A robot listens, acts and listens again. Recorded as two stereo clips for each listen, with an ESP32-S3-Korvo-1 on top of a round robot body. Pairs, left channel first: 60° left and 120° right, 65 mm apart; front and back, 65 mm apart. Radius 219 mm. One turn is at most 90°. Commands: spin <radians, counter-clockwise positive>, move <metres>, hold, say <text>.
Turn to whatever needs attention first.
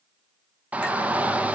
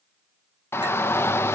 spin -0.96
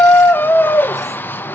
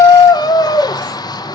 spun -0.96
say Found it: a shout, straight ahead, under 1 m away.